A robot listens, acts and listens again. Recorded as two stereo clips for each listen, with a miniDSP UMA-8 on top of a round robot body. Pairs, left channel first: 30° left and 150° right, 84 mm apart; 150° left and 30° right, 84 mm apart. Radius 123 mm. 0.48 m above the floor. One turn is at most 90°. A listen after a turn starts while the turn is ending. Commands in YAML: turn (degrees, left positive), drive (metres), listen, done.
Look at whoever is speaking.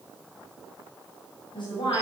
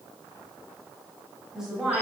turn: 55
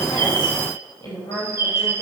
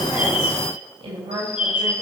turn: -10
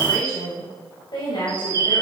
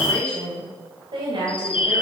done: "Found it: a woman speaking, straight ahead."